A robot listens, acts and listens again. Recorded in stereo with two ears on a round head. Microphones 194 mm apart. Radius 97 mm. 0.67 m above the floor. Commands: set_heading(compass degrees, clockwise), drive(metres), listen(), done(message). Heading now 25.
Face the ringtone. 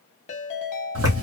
set_heading(355)
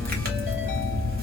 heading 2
listen()
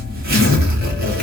listen()
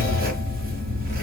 done("I heard a ringtone, but can't make it out now. It was about 10° left or 125° left.")